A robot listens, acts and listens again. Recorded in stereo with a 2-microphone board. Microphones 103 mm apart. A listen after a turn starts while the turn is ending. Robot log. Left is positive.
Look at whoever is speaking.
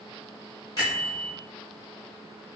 cmd idle
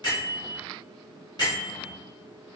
cmd idle
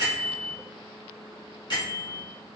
end: I can't make out anyone speaking to turn to.